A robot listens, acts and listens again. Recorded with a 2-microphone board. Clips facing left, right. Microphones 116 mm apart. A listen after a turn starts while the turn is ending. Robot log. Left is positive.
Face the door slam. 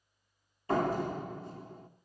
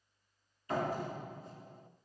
cmd yaw +90
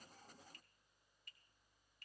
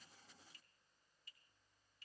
end: I heard a door slam from this way, but can't make it out now.